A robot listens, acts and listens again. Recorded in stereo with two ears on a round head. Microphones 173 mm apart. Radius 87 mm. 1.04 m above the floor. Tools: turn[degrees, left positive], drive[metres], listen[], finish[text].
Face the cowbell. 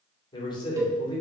Thought: The cowbell: about 15° right or 165° right.
Action: turn[-15]
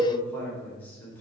Thought: So it is at 150° right.
Action: turn[-150]
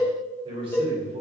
Thought: The cowbell is now 15° left.
Action: turn[15]
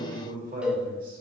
Action: finish[Facing the cowbell, 1 to 2 m away.]